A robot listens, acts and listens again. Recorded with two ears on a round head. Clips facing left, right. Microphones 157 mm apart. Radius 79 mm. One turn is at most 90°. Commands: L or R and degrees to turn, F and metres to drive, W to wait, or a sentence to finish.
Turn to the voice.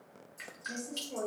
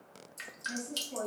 L55
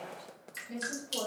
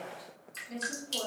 L10
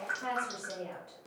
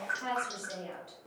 Found it: a woman speaking, straight ahead, 1 to 2 m away.